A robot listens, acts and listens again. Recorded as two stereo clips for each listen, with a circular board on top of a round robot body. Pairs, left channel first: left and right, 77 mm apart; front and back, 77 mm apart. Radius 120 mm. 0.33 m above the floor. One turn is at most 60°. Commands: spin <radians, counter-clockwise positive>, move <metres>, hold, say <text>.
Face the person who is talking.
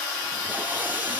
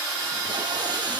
hold
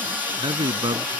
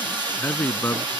spin -1.05
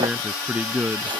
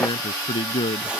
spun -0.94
spin -0.17
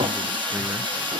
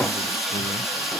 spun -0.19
hold
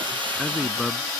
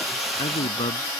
say Facing the man speaking.